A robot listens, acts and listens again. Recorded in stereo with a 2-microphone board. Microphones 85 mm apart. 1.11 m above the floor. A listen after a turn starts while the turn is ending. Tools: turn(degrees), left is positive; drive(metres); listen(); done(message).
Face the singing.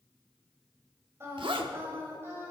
turn(degrees=-30)
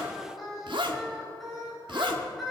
done("Found it: singing, straight ahead, 2 to 4 m away.")